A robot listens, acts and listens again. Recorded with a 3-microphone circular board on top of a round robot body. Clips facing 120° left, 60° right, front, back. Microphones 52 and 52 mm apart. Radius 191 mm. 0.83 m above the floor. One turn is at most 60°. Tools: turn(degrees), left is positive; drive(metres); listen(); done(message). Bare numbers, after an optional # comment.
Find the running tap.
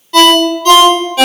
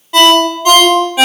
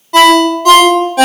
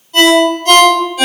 listen()
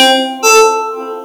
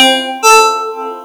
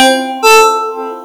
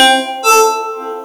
listen()
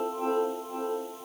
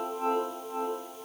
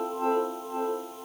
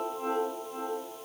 done("I can't make out a running tap, only a ringtone.")